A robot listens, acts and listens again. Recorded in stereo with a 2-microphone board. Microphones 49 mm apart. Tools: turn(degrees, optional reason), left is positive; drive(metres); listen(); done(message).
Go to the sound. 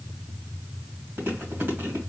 turn(degrees=-55, reason="The chewing: about 55° right or 125° right.")
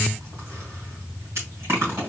turn(degrees=-70, reason="So it is at 70° right.")
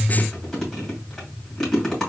turn(degrees=10, reason="The chewing is now 10° left.")
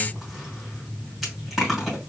drive(metres=1.0)
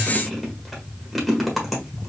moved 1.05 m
drive(metres=1.0)
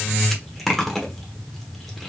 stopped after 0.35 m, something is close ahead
done("Arrived at the chewing, straight ahead.")